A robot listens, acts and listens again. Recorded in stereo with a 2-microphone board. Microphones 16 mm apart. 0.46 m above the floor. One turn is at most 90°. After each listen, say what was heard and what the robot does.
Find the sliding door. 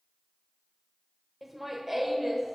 Keep listening.
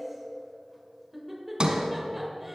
The sliding door: about 55° right or 125° right. Turn 55° right.
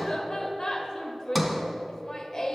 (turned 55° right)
Facing the sliding door, 1 to 2 m away.